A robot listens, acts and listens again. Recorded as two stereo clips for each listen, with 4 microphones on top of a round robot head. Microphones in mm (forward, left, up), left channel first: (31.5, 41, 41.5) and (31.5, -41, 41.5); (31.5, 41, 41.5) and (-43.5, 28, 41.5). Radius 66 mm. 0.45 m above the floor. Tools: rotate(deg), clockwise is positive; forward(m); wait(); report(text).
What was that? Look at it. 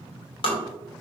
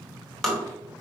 rotate(-90)
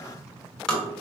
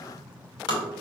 rotate(-10)
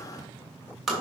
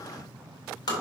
report("Found it: tapping, straight ahead.")